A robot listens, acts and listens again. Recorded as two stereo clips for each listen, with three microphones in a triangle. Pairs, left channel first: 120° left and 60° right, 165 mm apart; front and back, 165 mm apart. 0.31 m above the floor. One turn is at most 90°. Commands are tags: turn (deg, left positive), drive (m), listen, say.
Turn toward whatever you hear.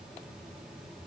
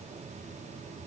<listen/>
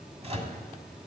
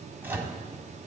<turn deg="-90"/>
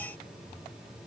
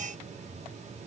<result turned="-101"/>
<listen/>
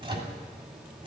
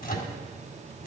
<say>Found it: a microwave, straight ahead, 1 to 2 m away.</say>